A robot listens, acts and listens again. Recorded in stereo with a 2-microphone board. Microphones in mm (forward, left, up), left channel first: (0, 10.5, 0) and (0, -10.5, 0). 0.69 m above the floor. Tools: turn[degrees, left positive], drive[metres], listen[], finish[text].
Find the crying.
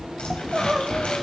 Thought: The crying: about 30° right or 150° right.
Action: turn[-30]
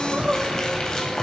Thought: So it is at 115° right.
Action: turn[-115]
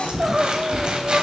Thought: The crying is now 30° right.
Action: turn[-30]
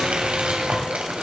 Action: listen[]
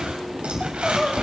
Action: finish[Found it: crying, straight ahead, 1 to 2 m away.]